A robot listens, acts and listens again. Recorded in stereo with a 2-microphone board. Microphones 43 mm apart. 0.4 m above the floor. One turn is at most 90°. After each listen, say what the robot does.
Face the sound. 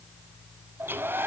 Turn 55° right.
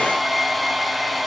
Facing the hair dryer, 1 to 2 m away.